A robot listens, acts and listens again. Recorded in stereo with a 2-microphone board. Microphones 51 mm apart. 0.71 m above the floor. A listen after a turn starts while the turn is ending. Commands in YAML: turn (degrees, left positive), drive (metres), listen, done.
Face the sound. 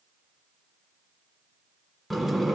turn: 30
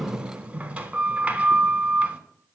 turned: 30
turn: -25
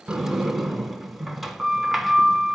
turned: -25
done: "Facing the sliding door."